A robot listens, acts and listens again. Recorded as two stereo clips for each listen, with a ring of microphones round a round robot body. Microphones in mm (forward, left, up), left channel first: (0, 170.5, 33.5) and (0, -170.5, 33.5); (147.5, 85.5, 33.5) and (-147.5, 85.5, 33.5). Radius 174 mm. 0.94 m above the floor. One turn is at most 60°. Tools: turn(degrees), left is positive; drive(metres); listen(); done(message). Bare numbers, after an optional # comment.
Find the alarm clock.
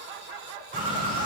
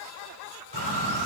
listen()
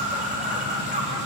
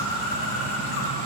listen()
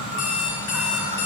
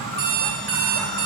# The alarm clock: 135° left.
turn(60)
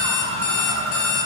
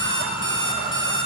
# The alarm clock is now 75° left.
turn(60)
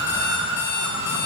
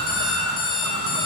# The alarm clock is now 25° left.
turn(25)
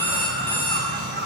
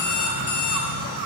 done("Found it: an alarm clock, straight ahead, 2 to 4 m away.")